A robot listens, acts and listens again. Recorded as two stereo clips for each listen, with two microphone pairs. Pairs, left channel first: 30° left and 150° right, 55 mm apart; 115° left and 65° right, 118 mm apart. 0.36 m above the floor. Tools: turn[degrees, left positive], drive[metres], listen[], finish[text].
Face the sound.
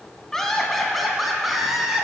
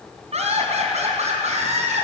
Thought: The laughter: 65° right.
Action: turn[-65]
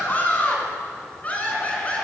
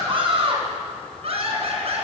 Thought: The laughter is now 35° right.
Action: turn[-35]
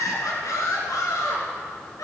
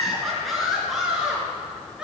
Thought: The laughter is now 20° left.
Action: turn[20]
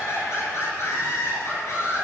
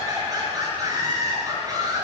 Action: finish[Facing the laughter, over 4 m away.]